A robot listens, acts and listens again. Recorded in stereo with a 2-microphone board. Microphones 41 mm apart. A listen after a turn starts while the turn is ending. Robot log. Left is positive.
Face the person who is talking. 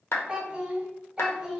cmd yaw -30
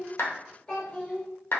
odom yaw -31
note: So it is at 25° left.
cmd yaw +25
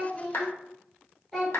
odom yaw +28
note: The child speaking is now 10° left.
cmd yaw +10
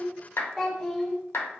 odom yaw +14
end: Found it: a child speaking, straight ahead.